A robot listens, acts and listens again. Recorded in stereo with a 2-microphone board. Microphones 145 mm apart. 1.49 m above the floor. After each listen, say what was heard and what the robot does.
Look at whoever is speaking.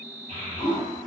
The child speaking: about 55° right or 125° right. Turn 55° right.
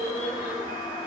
So it is at 65° right. Turn 65° right.
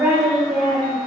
The child speaking is now 10° right. Turn 10° right.
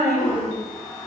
Found it: a child speaking, straight ahead.